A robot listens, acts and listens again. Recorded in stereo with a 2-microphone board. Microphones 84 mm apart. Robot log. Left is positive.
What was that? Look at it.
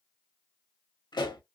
note: The pop: about 60° left or 120° left.
cmd yaw +60
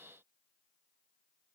cmd idle
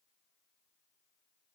end: I heard a pop, but can't make it out now. It was about straight ahead or 60° left.